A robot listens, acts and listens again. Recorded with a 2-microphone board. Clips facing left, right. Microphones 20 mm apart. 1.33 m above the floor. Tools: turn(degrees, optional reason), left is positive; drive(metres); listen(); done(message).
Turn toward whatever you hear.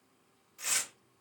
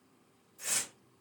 turn(degrees=45, reason="The tearing paper: about 45° left or 135° left.")
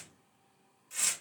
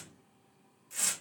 done("Facing the tearing paper.")